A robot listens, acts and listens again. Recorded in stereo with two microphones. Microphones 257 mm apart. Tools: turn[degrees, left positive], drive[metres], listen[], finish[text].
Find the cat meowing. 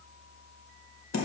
Action: listen[]
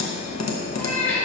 Action: turn[30]
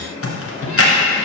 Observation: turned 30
Action: listen[]
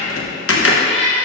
Thought: So it is at 155° left.
Action: turn[155]
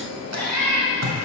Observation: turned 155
Action: finish[Found it: a cat meowing, straight ahead.]